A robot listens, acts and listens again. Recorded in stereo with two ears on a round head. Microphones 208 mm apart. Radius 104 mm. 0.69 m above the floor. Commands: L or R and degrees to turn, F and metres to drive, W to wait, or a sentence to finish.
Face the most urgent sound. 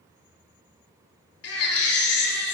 L70
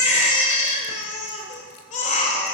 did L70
L35
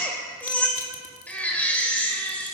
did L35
Facing the baby crying.